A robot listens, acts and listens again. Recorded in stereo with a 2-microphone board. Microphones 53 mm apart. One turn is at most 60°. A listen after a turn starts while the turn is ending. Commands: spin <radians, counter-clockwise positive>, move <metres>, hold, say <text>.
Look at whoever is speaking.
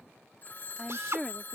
spin 0.52
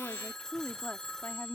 spin 1.05
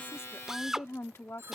spin 1.05
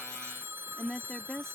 spin 0.17
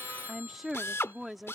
say Found it: a woman speaking, straight ahead.